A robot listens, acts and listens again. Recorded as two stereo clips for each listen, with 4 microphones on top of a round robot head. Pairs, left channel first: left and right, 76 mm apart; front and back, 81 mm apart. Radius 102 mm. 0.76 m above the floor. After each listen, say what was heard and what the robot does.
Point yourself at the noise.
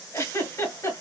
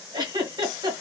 The giggle: 145° left. Turn 145° left.
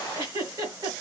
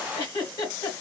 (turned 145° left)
The giggle is now 45° right. Turn 45° right.
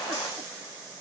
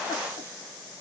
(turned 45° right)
Keep listening.
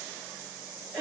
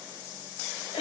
The giggle is now 15° right. Turn 15° right.
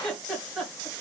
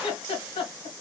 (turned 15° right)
Found it: a giggle, straight ahead, 1 to 2 m away.